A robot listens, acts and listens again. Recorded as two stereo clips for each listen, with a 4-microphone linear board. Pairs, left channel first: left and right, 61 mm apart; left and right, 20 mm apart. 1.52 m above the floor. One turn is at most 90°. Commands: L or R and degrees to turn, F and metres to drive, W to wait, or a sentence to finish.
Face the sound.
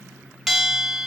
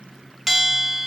L30
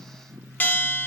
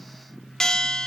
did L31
L90
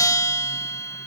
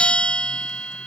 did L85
L65
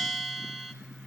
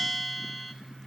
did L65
Facing the bell.